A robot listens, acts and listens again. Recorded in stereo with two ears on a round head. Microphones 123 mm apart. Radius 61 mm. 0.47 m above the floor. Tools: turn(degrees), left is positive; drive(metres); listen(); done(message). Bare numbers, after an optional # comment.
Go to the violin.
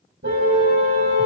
listen()
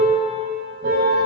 listen()
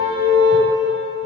done("I can't make out a violin to turn to.")